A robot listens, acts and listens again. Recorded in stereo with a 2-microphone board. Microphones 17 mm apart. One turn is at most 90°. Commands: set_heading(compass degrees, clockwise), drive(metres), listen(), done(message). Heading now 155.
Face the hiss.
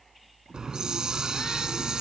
set_heading(205)
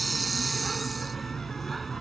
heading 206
done("Found it: a hiss, straight ahead.")